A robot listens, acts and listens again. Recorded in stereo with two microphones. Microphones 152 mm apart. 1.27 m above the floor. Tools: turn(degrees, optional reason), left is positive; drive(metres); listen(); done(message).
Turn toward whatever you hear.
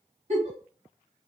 turn(degrees=-50, reason="The giggle: about 50° right or 130° right.")
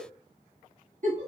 turn(degrees=-70, reason="So it is at 70° right.")
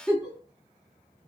done("Found it: a giggle, straight ahead.")